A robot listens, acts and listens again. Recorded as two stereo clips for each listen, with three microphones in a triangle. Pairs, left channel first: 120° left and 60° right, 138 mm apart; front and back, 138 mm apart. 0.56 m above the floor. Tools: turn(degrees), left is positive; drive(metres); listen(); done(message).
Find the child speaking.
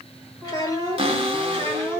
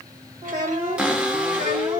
turn(degrees=-170)
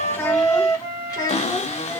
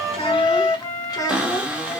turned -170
turn(degrees=65)
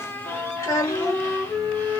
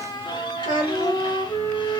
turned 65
turn(degrees=55)
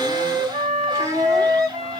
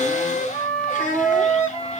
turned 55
done("Found it: a child speaking, straight ahead.")